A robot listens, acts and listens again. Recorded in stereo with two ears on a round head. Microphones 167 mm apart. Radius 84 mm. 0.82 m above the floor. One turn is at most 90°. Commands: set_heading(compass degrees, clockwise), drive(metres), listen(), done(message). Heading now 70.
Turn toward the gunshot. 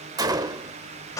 set_heading(90)
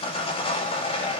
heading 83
listen()
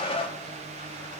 done("I heard a gunshot, but can't make it out now. It was about 10° right or 145° right.")